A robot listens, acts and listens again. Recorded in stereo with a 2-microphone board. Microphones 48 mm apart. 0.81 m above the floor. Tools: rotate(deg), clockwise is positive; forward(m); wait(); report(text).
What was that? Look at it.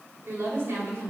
rotate(55)
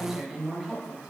report("Found it: a woman speaking, straight ahead.")